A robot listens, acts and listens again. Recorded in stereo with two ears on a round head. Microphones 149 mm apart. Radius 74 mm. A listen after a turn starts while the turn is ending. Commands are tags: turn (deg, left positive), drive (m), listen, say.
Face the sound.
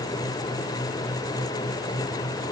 <listen/>
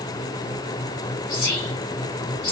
<turn deg="55"/>
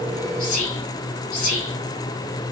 <turn deg="55"/>
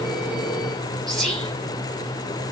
<say>Facing the whispering, 1 to 2 m away.</say>